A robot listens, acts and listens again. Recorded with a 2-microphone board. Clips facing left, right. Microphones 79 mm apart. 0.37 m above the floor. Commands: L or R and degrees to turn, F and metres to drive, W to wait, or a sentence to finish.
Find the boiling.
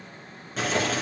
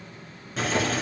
L30
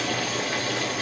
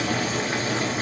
R35
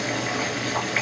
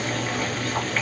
L10
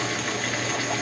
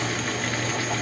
Facing the boiling.